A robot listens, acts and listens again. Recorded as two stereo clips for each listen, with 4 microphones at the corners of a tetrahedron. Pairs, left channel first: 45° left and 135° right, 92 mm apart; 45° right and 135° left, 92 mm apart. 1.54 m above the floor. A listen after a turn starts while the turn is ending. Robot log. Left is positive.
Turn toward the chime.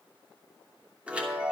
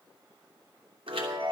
note: The chime: 150° left.
cmd yaw +150
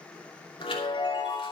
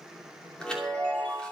note: The chime is now 35° left.
cmd yaw +35
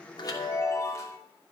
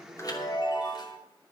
note: The chime is now 10° right.
cmd yaw -10
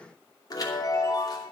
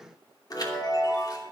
end: Facing the chime, 2 to 4 m away.